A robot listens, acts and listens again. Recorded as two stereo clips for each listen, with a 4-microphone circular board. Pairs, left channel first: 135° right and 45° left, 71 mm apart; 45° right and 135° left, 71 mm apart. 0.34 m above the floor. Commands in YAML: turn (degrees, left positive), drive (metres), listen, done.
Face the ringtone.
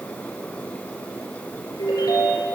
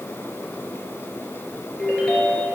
turn: -120
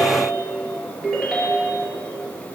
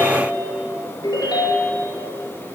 turn: -45
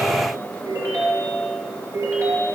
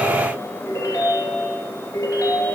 done: "Found it: a ringtone, straight ahead, 2 to 4 m away."